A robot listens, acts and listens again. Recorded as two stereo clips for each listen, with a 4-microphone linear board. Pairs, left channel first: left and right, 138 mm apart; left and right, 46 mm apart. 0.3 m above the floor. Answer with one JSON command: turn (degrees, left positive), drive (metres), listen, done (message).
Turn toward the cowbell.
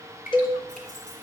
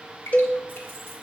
{"turn": 40}
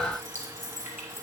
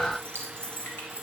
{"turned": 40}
{"listen": true}
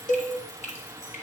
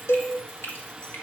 {"turn": 100}
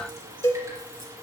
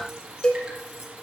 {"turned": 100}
{"turn": 20}
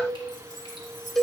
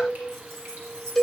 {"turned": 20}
{"done": "Facing the cowbell, 1 to 2 m away."}